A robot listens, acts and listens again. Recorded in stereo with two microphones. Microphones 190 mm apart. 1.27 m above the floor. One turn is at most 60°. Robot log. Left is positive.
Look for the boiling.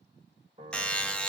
cmd idle
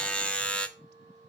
cmd idle
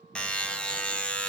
end: I can't make out boiling to turn to.